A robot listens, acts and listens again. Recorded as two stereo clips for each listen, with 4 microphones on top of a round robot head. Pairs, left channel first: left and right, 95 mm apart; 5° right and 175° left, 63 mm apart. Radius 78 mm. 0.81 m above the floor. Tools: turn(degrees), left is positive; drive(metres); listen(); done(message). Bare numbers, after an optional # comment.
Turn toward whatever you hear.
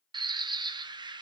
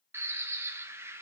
# The bird: 130° right.
turn(-130)
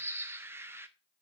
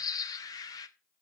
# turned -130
# The bird is now 25° right.
turn(-25)
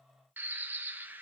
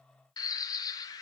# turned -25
# The bird is now 15° right.
turn(-15)
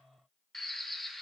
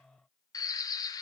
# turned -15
done("Found it: a bird, straight ahead, under 1 m away.")